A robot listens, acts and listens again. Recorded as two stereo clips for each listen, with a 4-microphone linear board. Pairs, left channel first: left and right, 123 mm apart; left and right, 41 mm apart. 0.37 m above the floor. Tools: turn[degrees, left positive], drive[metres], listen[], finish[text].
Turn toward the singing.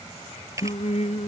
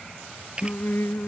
Thought: The singing: about 65° left or 115° left.
Action: turn[65]
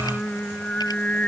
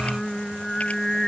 Thought: So it is at 10° left.
Action: turn[10]
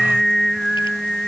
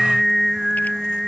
Action: finish[Found it: singing, straight ahead.]